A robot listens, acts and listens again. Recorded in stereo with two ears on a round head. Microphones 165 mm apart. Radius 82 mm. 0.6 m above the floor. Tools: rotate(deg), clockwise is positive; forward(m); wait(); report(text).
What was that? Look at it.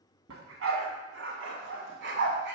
rotate(60)
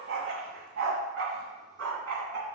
rotate(85)
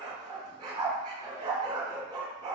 rotate(25)
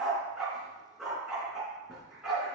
report("Facing the dog barking.")